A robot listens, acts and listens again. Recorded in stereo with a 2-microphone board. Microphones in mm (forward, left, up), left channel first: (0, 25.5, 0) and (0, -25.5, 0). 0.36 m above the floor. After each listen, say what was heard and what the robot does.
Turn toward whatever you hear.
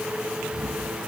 Turn 30° right.
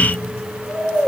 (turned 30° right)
So it is at 20° left. Turn 20° left.
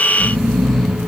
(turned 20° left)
Facing the snoring, 2 to 4 m away.